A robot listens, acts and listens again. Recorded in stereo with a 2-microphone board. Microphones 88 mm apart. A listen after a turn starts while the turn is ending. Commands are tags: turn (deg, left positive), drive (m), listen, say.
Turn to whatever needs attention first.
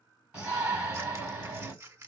<turn deg="-30"/>
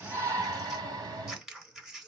<turn deg="-135"/>
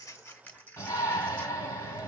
<turn deg="30"/>
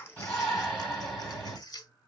<say>Found it: a shout, straight ahead, 2 to 4 m away.</say>